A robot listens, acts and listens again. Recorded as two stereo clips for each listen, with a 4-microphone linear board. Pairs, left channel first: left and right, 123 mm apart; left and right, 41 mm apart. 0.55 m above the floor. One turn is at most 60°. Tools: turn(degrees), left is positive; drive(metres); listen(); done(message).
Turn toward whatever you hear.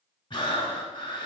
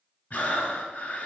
turn(degrees=40)
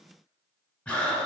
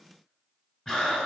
turn(degrees=10)
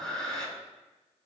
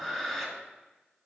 done("Facing the breathing.")